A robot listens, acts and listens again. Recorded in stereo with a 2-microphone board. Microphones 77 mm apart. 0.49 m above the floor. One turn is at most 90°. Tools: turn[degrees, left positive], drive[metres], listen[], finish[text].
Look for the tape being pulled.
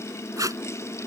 Thought: The tape being pulled: about 45° right or 135° right.
Action: turn[-45]
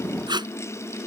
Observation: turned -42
Thought: So it is at 90° right.
Action: turn[-90]
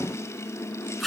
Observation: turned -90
Action: finish[Facing the tape being pulled.]